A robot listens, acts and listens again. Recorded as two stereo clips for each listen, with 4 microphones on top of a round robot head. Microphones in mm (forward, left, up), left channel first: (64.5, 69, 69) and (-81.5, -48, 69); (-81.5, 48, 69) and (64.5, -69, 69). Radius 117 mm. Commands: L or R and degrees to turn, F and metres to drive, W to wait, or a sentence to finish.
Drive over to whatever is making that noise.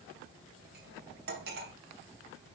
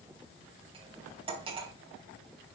R100
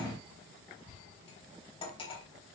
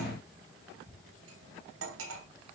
R25
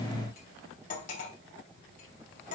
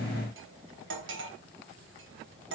R10
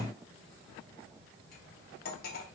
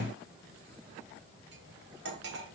F1.0
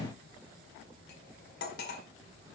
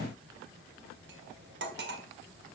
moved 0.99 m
F1.0
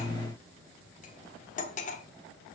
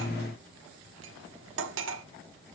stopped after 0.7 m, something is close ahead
R15
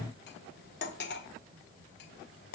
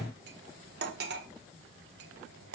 Arrived at the cutlery clinking, straight ahead.